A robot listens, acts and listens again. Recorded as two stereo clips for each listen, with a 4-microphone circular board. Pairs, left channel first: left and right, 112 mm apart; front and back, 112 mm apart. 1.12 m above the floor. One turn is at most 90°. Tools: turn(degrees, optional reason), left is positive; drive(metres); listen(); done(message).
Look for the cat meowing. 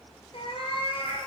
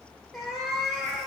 turn(degrees=85, reason="The cat meowing: 85° left.")
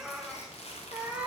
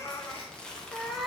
turn(degrees=-90, reason="The cat meowing is now 100° right.")
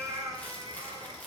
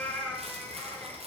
turn(degrees=-70, reason="The cat meowing is now 70° right.")
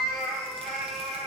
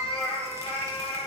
done("Found it: a cat meowing, straight ahead.")